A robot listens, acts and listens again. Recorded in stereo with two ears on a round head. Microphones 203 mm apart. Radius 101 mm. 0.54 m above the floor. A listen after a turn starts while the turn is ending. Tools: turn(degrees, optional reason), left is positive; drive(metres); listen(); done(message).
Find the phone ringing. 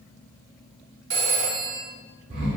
turn(degrees=-60, reason="The phone ringing: about 60° right or 120° right.")
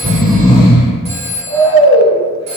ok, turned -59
turn(degrees=-35, reason="So it is at 35° right.")
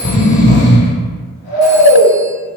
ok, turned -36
listen()
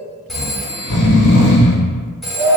listen()
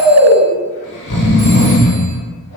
done("Facing where the phone ringing came from. I can't hear it now.")